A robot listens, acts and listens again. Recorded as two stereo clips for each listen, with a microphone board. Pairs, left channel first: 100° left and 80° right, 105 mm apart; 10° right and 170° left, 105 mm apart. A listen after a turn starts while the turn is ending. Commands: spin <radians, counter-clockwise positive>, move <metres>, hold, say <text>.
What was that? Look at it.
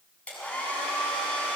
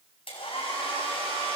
spin 0.35
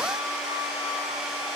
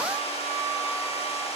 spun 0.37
say Found it: a hair dryer, straight ahead, over 4 m away.